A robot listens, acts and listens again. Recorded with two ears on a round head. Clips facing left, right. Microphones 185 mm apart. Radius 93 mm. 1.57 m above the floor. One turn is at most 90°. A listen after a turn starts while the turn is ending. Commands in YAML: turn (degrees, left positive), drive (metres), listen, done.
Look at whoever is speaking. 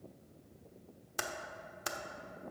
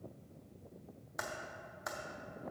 listen: true
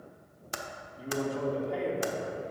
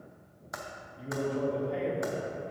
turn: 30
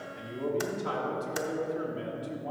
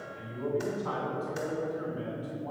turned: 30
turn: 90
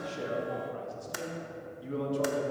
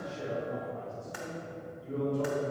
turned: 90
turn: 90
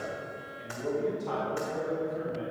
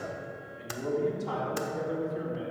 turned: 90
turn: -10
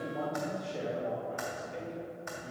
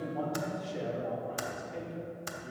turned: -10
done: "Found it: a man speaking, straight ahead, 2 to 4 m away."